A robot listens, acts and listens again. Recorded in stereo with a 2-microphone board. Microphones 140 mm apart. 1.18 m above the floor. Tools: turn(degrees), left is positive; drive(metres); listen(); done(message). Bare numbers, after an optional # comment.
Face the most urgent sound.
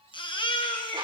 # The baby crying: about 40° left or 140° left.
turn(40)
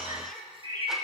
listen()
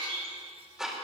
listen()
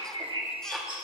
done("I heard a baby crying, but can't make it out now. It was about straight ahead or 100° left.")